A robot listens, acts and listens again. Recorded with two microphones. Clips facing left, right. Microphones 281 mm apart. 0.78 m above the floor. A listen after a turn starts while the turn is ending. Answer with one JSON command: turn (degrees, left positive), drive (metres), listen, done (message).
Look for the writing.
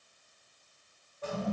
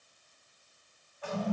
{"listen": true}
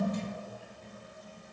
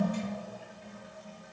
{"listen": true}
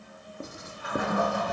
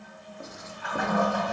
{"turn": 35}
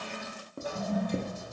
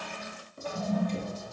{"turn": 100}
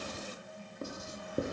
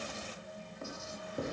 {"turn": 45}
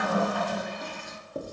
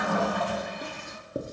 {"turn": -25}
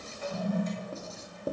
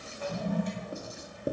{"turn": -15}
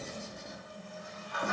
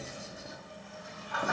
{"done": "Found it: writing, straight ahead, under 1 m away."}